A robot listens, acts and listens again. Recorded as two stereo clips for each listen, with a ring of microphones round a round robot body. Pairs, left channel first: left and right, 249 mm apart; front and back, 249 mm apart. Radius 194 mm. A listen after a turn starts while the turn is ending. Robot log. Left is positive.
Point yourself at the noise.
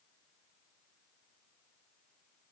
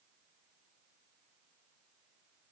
cmd idle
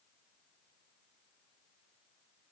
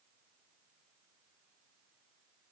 cmd idle
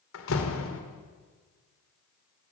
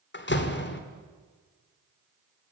note: The door slam: 45° left.
cmd yaw +45
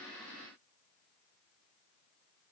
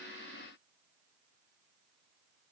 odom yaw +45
end: I heard a door slam from this way, but can't make it out now.